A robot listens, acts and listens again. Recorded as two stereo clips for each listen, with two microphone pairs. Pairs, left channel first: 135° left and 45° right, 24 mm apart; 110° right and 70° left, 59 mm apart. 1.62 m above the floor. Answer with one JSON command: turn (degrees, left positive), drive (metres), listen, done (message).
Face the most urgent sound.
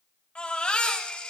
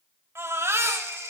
{"turn": 105}
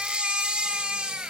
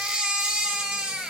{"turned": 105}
{"done": "Found it: a baby crying, straight ahead, over 4 m away."}